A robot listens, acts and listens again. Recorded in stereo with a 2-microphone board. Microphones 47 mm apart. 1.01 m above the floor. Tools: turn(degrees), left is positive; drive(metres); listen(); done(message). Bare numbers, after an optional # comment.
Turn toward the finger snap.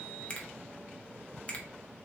# The finger snap: about 30° left or 150° left.
turn(30)
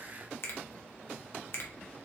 # So it is at 120° left.
turn(120)
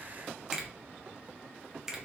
# The finger snap is now 10° right.
turn(-10)
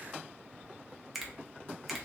done("Found it: a finger snap, straight ahead.")